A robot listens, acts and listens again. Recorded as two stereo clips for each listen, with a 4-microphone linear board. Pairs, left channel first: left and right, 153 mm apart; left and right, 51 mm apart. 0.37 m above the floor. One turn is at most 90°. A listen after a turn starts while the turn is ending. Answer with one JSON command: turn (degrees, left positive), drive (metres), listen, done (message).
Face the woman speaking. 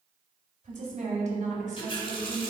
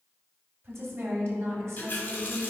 {"turn": -55}
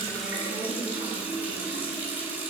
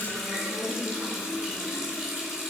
{"listen": true}
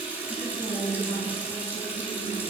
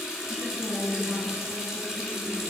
{"done": "Found it: a woman speaking, straight ahead."}